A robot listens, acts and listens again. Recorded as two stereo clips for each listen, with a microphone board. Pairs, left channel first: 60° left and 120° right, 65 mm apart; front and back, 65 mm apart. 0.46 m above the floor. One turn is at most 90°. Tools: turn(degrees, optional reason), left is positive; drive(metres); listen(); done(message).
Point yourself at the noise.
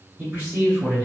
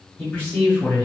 turn(degrees=-60, reason="The man speaking: 60° right.")
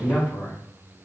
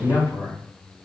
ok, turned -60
done("Facing the man speaking.")